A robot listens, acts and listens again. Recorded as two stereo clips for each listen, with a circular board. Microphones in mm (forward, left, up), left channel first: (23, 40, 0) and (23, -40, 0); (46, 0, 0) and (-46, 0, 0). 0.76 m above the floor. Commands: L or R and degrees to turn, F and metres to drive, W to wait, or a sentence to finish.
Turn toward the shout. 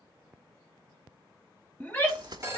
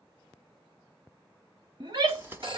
L155
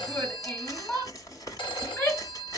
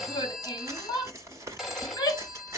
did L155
L35
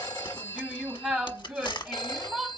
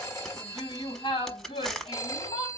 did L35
Found it: a shout, straight ahead, 2 to 4 m away.